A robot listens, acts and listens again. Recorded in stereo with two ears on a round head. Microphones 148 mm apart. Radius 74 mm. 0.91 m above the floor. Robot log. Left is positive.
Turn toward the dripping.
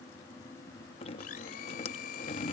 note: The dripping: about 35° left or 145° left.
cmd yaw +35
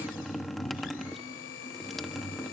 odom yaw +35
end: Facing the dripping.